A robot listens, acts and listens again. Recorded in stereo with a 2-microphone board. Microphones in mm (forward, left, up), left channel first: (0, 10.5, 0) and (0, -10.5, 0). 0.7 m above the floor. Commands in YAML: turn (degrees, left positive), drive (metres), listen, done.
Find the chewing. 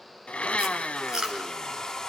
turn: -30
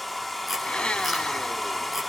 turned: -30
listen: true
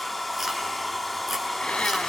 listen: true
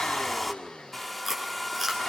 done: "Facing the chewing, over 4 m away."